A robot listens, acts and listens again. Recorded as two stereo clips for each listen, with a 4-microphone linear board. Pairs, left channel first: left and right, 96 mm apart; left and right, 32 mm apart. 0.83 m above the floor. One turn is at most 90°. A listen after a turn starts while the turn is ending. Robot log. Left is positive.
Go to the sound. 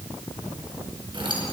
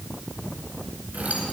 note: The keys jangling: about 65° right or 115° right.
cmd yaw -65
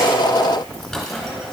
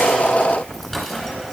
cmd fwd 1.0
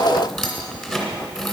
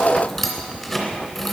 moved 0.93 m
cmd fwd 1.0
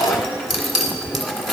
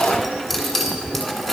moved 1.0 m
cmd fwd 1.0
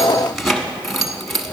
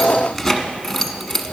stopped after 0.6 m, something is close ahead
end: Arrived at the keys jangling, straight ahead.